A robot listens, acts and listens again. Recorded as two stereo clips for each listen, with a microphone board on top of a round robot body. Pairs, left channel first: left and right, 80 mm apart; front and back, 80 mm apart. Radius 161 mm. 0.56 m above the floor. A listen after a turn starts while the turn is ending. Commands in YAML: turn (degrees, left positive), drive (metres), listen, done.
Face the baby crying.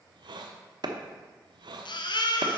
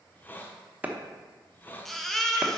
turn: 85
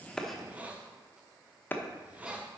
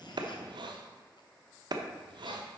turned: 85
listen: true
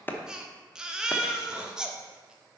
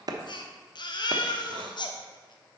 turn: -10
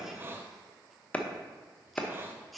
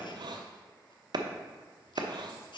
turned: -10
done: "Found it: a baby crying, straight ahead."